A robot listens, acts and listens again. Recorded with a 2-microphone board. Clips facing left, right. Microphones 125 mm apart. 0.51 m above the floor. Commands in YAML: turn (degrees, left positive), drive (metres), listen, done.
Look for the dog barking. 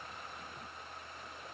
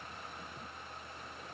listen: true
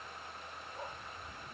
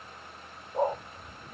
turn: -60
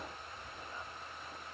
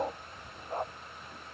turn: -60
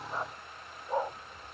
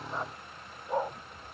done: "Facing the dog barking."